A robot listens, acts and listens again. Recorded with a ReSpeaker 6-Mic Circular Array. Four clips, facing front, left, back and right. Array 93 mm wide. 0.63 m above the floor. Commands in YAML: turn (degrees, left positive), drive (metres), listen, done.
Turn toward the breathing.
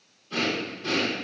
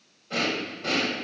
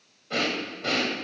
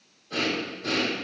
turn: 160
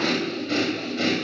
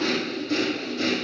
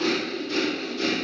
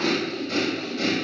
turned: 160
done: "Facing the breathing, 2 to 4 m away."